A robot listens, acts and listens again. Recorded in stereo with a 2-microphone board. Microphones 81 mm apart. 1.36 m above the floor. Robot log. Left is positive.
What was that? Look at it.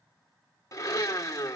note: The blender: about 40° left or 140° left.
cmd yaw +40
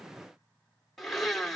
end: Found it: a blender, straight ahead, 2 to 4 m away.